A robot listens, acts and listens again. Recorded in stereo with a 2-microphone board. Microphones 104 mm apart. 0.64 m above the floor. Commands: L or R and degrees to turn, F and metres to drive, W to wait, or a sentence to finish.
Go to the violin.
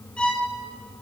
L30
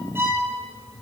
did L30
R20
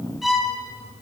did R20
F1.0
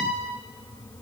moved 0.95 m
F1.0
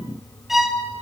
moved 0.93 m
F1.0
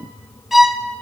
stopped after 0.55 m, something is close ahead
I am next to the violin.